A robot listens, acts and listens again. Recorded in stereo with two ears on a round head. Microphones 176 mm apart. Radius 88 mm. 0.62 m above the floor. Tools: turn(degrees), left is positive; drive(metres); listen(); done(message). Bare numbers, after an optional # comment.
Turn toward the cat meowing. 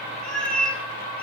turn(30)
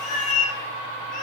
# So it is at 140° left.
turn(140)
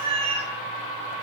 # The cat meowing is now 30° right.
turn(-30)
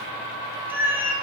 # The cat meowing is now 10° right.
turn(-10)
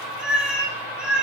done("Facing the cat meowing, 2 to 4 m away.")